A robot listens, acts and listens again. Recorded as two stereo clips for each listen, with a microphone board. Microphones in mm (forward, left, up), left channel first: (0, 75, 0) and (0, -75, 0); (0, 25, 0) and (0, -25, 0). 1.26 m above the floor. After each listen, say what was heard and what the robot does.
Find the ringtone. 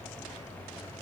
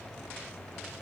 Keep listening.
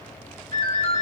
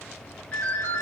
The ringtone: about 35° left or 145° left. Turn 35° left.
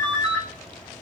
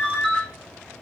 Facing the ringtone.